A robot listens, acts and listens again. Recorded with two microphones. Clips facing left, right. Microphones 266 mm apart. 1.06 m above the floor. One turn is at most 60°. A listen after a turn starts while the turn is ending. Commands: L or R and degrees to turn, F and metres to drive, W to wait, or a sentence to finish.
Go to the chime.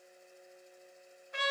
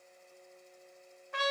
W
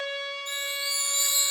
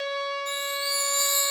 L30
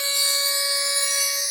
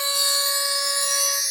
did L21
R20
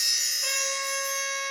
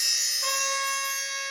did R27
F1.0
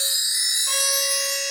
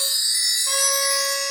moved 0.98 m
L10
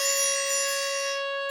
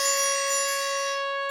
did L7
F1.0
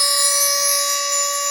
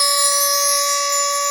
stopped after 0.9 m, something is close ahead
L10
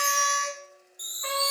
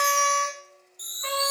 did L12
Arrived at the chime, straight ahead.